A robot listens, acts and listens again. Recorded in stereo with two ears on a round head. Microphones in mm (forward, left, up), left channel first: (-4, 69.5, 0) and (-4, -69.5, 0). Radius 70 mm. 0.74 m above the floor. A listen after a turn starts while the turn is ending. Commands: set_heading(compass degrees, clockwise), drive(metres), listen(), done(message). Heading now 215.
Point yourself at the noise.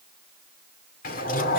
set_heading(155)
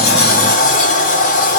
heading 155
set_heading(100)
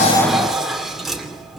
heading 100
done("Facing the sliding door, 2 to 4 m away.")